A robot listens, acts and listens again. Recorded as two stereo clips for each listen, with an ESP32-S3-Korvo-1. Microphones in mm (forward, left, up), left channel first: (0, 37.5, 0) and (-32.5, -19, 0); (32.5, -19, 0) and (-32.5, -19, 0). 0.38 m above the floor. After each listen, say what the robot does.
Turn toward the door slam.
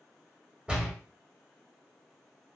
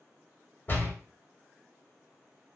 Turn 45° right.
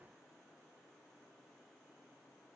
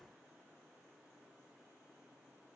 Facing where the door slam came from. I can't hear it now.